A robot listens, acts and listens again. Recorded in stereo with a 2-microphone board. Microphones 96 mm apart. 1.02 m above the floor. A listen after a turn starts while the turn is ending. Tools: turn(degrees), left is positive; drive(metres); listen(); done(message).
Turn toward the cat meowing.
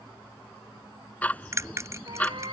turn(degrees=-55)
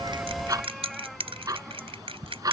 done("Found it: a cat meowing, straight ahead.")